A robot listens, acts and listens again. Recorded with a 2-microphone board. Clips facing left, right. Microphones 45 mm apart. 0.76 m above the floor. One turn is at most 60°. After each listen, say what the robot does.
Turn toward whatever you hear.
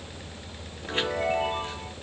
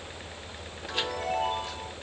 Turn 35° left.
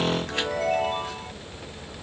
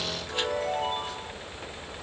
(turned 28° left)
Turn 60° left.
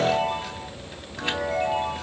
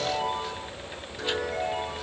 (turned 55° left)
Turn 60° left.
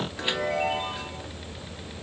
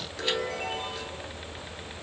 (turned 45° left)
Turn 20° left.
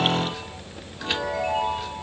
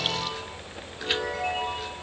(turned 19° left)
Facing the chime, 1 to 2 m away.